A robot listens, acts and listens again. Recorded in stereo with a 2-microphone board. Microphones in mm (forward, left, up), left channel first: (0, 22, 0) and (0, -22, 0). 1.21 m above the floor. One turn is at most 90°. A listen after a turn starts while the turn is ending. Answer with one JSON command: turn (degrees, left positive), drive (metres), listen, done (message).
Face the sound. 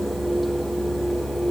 {"listen": true}
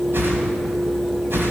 {"turn": -65}
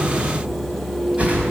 {"turn": -35}
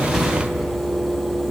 {"listen": true}
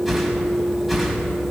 {"turn": -10}
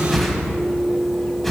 {"done": "Found it: a whoosh, straight ahead, 2 to 4 m away."}